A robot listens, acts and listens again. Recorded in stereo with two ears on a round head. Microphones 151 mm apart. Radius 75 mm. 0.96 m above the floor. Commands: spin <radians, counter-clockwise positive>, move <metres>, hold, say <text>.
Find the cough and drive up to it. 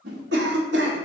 spin -1.31
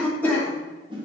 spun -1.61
spin 0.17
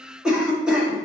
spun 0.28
move 1.0
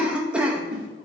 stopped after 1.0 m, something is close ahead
spin -0.17
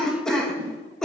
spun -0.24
say Arrived at the cough, straight ahead.